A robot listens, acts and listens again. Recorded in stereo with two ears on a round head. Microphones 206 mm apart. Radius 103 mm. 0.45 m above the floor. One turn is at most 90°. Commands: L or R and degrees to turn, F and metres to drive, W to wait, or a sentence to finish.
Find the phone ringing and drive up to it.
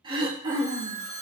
L50
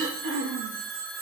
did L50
F1.0
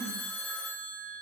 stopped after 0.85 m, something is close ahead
L15
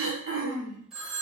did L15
Arrived at the phone ringing, straight ahead.